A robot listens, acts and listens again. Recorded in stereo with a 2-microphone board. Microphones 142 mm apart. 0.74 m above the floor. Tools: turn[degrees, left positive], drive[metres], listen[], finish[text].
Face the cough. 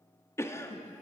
Thought: The cough: about 20° left or 160° left.
Action: turn[20]
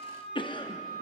Thought: So it is at 140° left.
Action: turn[140]
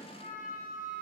Action: listen[]
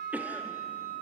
Thought: The cough is now 15° right.
Action: turn[-15]
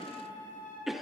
Action: finish[Found it: a cough, straight ahead, under 1 m away.]